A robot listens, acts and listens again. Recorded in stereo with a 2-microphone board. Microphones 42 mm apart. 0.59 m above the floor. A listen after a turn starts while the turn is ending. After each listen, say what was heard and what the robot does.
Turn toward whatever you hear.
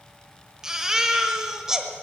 The baby crying: about 15° right or 165° right. Turn 15° right.
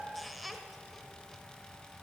Facing the baby crying.